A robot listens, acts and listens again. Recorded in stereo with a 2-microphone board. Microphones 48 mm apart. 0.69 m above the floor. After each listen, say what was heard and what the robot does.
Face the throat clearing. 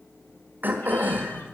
The throat clearing: about 45° right or 135° right. Turn 45° right.
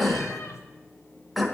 Facing the throat clearing, 1 to 2 m away.